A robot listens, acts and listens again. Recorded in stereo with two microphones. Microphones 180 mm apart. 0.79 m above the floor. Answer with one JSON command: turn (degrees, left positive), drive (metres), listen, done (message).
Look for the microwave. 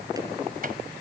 {"turn": -55}
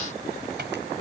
{"turn": -70}
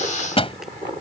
{"turn": 30}
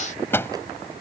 {"turn": 15}
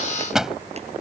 {"done": "Facing the microwave."}